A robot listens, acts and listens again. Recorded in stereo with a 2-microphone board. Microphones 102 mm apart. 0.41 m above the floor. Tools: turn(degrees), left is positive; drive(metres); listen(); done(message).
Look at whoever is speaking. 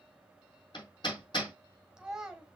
turn(degrees=-30)
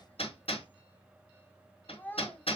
turn(degrees=20)
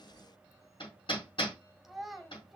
done("Found it: a child speaking, straight ahead, 1 to 2 m away.")